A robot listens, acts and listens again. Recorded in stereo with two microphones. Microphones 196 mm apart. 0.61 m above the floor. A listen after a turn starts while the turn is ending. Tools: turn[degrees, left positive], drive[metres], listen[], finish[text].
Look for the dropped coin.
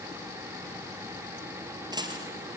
Thought: The dropped coin: about 20° right or 160° right.
Action: turn[-20]
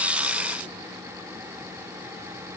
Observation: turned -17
Action: listen[]
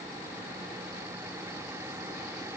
Action: finish[I heard a dropped coin, but can't make it out now. It was about 5° right or 145° right.]